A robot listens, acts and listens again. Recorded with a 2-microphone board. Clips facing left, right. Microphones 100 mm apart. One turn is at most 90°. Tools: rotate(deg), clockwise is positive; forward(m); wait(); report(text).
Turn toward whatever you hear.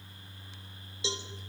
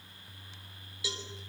rotate(-25)
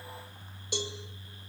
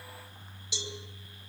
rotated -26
rotate(-90)
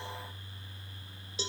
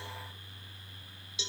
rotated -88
rotate(-40)
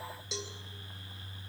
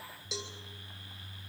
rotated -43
report("Facing the cowbell, 2 to 4 m away.")